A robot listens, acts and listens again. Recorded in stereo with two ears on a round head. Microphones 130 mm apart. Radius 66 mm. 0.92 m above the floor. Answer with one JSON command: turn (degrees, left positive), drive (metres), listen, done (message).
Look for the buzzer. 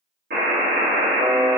{"turn": -70}
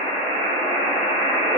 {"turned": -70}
{"turn": -40}
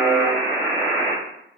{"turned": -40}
{"done": "Facing the buzzer."}